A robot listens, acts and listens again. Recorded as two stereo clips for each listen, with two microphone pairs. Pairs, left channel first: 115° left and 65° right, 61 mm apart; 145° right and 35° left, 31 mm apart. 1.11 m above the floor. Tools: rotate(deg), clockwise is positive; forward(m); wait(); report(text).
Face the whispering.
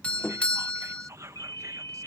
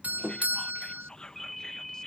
rotate(85)
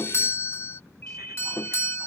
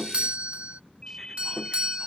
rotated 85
wait()
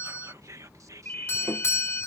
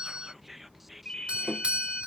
rotate(45)
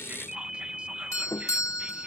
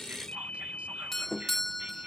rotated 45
wait()
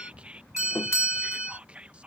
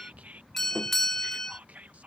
report("Found it: whispering, straight ahead.")